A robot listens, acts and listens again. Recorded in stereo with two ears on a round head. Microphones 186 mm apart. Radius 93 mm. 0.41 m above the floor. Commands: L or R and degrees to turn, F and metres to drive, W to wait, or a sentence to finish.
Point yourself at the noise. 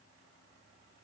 W
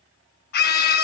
L50
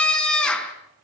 Found it: a scream, straight ahead, over 4 m away.